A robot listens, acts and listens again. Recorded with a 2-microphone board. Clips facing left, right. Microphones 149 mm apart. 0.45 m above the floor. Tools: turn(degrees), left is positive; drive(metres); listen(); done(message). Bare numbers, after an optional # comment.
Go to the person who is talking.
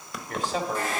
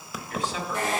# The man speaking: about 55° left or 125° left.
turn(55)
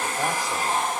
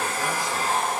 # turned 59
listen()
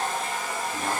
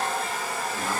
listen()
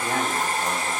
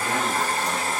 done("I heard a man speaking, but can't make it out now. It was about 5° right or 65° left. I did not reach it.")